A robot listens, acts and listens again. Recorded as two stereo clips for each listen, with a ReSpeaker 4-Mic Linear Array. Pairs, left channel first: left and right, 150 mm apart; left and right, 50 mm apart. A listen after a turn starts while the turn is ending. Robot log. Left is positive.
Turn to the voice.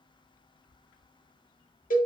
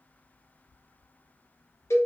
cmd idle
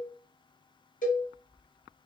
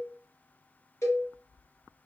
cmd idle
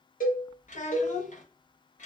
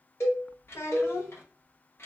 note: The child speaking: about 55° left or 125° left.
cmd yaw +55
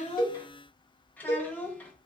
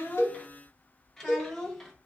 note: So it is at 10° left.
cmd yaw +10
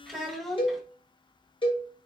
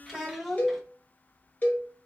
end: Facing the child speaking, under 1 m away.